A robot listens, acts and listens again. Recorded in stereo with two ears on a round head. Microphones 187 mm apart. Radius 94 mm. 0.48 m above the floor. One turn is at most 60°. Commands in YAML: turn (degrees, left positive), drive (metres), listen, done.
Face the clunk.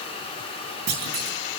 turn: -55
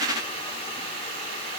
listen: true
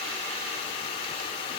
done: "I heard a clunk, but can't make it out now. It was about straight ahead or 70° right."